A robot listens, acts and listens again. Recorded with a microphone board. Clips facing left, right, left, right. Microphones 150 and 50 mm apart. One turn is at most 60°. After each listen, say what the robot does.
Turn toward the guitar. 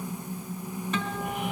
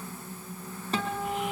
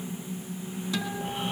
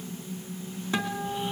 Turn 35° right.
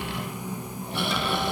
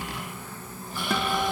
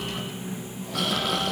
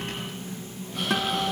Keep listening.
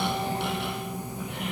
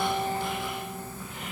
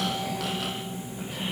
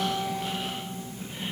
Keep listening.
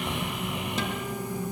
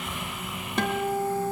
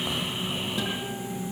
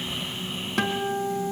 Turn 60° right.
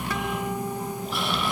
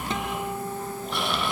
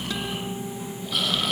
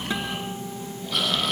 Turn 45° right.
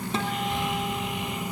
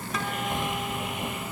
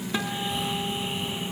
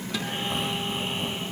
Turn 30° left.
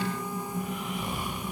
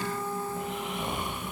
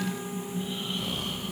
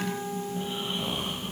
Keep listening.
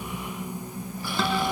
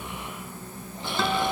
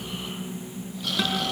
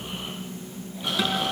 Facing the guitar.